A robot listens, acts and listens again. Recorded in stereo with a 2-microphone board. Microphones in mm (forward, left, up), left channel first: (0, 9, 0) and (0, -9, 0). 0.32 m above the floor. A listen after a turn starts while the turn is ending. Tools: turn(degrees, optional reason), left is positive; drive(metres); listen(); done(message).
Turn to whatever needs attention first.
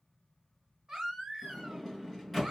turn(degrees=-40, reason="The baby crying: about 40° right or 140° right.")
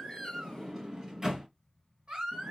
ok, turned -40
turn(degrees=-100, reason="So it is at 100° right.")
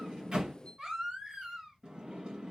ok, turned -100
turn(degrees=-30, reason="The baby crying is now 30° right.")
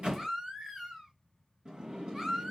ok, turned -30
turn(degrees=-10, reason="The baby crying is now 10° right.")
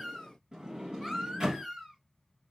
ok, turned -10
done("Found it: a baby crying, straight ahead, 2 to 4 m away.")